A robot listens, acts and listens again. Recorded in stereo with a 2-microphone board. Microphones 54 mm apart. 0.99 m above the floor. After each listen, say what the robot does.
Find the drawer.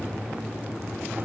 Keep listening.
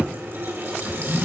Turn 40° right.
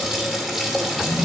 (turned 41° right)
Turn 100° right.
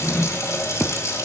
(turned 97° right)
Facing the drawer.